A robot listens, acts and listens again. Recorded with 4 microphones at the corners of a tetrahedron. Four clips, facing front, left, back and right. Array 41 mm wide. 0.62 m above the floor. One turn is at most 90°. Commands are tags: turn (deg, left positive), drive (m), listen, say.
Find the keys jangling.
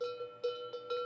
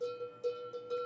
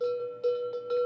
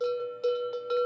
<listen/>
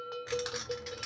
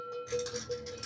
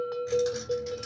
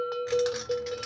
<turn deg="-50"/>
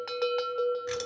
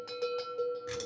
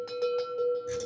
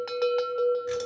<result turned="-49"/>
<listen/>
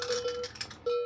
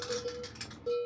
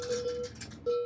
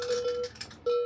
<say>Facing the keys jangling.</say>